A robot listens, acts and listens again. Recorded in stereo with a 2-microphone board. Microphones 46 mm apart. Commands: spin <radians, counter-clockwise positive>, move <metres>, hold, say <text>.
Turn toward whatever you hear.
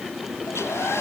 spin 1.22
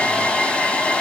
spin 0.44
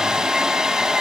spin -0.17
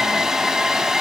say Facing the hair dryer, 1 to 2 m away.